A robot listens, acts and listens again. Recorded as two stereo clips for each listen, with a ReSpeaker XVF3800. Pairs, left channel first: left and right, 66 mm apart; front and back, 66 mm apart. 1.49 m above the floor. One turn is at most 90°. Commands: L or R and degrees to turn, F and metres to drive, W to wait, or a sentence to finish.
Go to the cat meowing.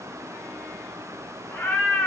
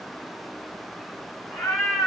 L35
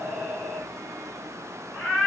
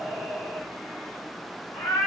F1.0
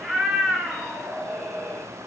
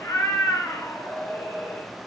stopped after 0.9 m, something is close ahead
I am next to the cat meowing.